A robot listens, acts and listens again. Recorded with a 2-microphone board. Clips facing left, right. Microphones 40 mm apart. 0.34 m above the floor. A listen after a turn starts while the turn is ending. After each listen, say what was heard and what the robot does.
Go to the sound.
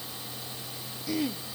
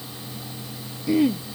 The throat clearing: about 20° right or 160° right. Turn 20° right.
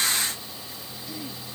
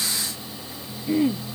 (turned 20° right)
So it is at 140° right. Turn 140° right.
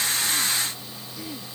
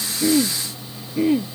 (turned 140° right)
The throat clearing is now 45° right. Turn 45° right.
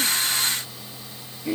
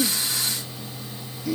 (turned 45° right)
The throat clearing is now 25° left. Turn 25° left.
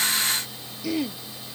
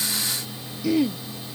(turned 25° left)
Drive 1.0 m forward.
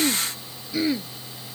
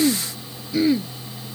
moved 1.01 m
Drive 1.0 m forward.
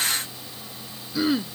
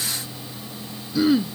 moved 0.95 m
Drive 1.0 m forward.
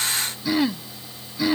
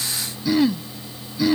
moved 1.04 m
The throat clearing is now 15° left. Turn 15° left.
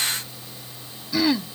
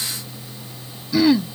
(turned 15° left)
Drive 1.0 m forward.
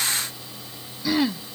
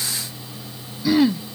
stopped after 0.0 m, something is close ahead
Arrived at the throat clearing, straight ahead.